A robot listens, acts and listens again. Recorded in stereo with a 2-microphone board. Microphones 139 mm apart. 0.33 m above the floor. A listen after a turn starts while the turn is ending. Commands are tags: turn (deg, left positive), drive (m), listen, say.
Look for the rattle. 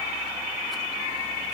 <listen/>
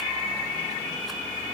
<listen/>
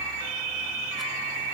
<say>I can't make out a rattle.</say>